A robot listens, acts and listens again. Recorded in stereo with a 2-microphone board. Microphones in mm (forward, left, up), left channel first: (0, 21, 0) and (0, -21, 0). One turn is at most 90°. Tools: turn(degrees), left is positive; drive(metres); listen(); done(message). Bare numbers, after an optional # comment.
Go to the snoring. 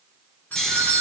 turn(30)
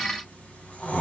# So it is at 140° left.
turn(90)
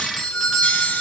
# Nothing new. It was at 50° left.
turn(50)
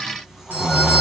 drive(1.0)
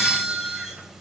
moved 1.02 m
listen()
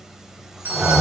# The snoring is now 10° right.
turn(-10)
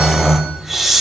drive(1.0)
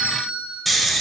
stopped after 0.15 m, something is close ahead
done("I am next to the snoring.")